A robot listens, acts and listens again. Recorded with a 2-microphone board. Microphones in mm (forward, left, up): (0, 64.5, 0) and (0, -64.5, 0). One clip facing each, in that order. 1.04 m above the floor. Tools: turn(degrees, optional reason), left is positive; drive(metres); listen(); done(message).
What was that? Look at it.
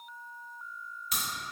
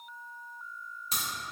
turn(degrees=-30, reason="The crack: about 30° right or 150° right.")
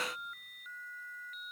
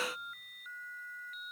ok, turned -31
listen()
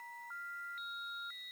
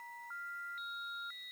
done("I heard a crack, but can't make it out now. It was about straight ahead or 115° right.")